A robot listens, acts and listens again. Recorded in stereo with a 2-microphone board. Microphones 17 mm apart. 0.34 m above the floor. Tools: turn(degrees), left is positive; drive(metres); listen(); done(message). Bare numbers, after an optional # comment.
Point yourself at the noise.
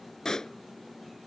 # The pop: about 40° left or 140° left.
turn(40)
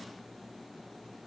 listen()
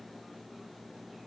done("I heard a pop, but can't make it out now. It was about straight ahead or 100° left.")